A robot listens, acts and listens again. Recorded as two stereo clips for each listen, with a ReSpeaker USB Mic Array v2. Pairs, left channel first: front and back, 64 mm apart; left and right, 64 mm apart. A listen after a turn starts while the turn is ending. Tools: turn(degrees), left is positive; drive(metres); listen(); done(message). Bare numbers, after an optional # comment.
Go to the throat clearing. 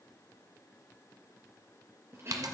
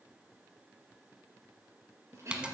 # The throat clearing: 135° right.
turn(-135)
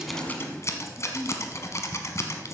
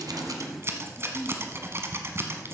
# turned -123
# The throat clearing is now 10° right.
turn(-10)
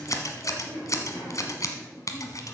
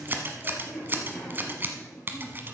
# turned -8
drive(1.0)
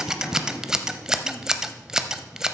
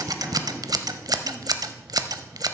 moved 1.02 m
listen()
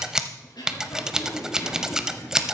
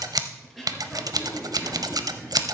drive(1.0)
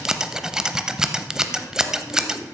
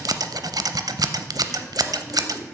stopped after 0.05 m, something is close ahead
listen()
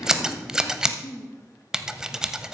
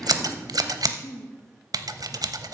done("Blocked. The throat clearing is further on, straight ahead.")